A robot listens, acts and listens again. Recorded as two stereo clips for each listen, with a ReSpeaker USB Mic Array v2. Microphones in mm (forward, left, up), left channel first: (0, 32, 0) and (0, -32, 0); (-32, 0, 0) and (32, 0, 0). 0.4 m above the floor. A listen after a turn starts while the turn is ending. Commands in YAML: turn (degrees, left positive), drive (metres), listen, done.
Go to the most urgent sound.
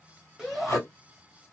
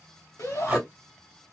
turn: -175
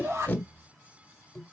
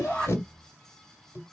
listen: true
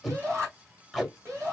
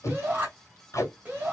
turn: -60
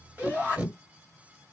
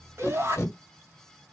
turn: -35
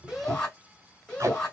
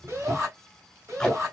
turn: 20
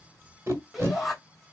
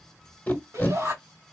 drive: 1.0
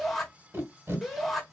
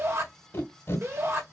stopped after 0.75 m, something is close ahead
done: "Arrived at the shout, straight ahead."